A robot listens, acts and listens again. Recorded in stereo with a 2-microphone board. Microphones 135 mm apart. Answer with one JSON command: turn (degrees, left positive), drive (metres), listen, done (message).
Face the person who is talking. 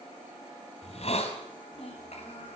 {"turn": 50}
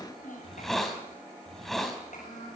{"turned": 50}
{"turn": 80}
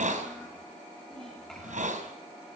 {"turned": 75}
{"done": "Facing the child speaking, over 4 m away."}